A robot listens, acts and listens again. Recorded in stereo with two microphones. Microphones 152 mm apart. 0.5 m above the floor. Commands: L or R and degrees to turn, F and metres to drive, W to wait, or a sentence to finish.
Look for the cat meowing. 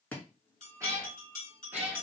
R30
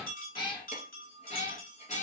L50
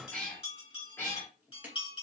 L15
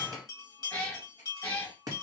L10
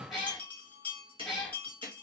Facing the cat meowing, 2 to 4 m away.